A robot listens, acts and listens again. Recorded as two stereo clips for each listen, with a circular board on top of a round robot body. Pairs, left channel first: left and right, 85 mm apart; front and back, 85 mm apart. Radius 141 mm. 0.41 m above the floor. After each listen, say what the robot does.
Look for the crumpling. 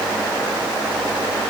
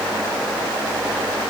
Keep listening.
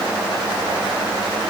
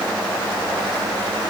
Keep listening.
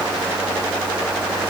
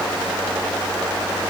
I can't make out crumpling.